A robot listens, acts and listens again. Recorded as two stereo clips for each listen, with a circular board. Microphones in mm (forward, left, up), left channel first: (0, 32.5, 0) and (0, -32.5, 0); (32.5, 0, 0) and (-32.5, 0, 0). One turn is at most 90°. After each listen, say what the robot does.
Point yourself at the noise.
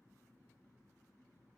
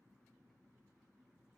Keep listening.
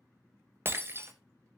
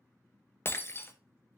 Turn 45° right.
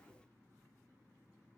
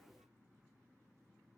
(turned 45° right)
Facing where the breaking glass came from. I can't hear it now.